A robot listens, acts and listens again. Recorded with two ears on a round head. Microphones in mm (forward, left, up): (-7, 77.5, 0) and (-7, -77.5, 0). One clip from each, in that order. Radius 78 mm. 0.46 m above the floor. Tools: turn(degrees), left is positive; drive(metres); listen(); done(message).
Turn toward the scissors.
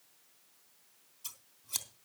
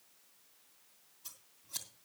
turn(degrees=60)
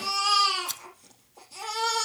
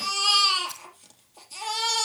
turn(degrees=55)
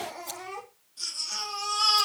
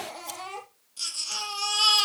listen()
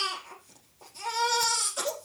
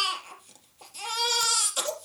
listen()
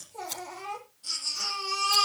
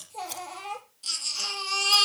turn(degrees=-10)
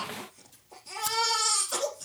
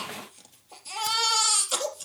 listen()
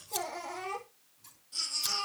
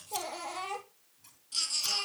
listen()
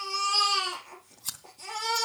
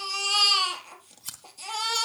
done("Facing the scissors.")